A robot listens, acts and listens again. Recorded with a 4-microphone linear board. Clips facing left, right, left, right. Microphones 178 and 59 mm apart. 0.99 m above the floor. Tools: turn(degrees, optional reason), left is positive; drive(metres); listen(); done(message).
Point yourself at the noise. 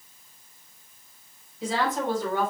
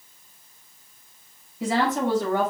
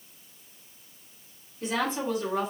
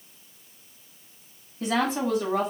turn(degrees=-70, reason="The woman speaking: about 70° right or 110° right.")
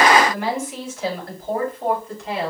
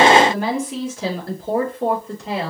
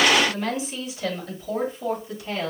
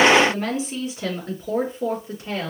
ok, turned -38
turn(degrees=-30, reason="So it is at 30° right.")
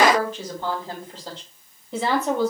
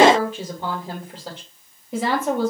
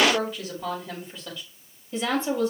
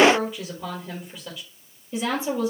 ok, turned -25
done("Found it: a woman speaking, straight ahead.")